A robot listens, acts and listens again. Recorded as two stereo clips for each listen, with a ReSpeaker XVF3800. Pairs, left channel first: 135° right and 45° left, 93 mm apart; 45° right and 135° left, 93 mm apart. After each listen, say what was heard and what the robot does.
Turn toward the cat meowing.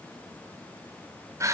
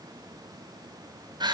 Keep listening.
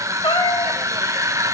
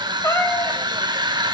The cat meowing: 100° right. Turn 100° right.
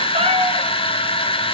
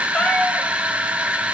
The cat meowing is now 35° left. Turn 35° left.
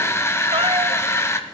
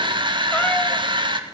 Keep listening.
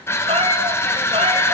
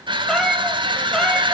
The cat meowing is now 40° left. Turn 40° left.
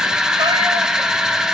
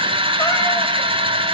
Keep listening.
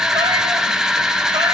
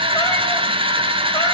Keep listening.
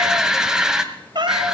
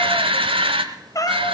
Found it: a cat meowing, straight ahead, 1 to 2 m away.